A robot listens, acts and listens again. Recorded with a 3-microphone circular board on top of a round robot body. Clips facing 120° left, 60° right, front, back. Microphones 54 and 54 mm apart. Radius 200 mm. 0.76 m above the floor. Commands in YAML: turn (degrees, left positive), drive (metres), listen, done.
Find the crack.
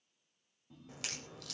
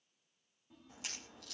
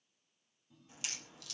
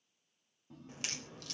turn: 135
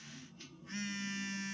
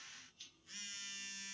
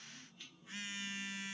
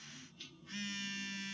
done: "Facing where the crack came from. I can't hear it now."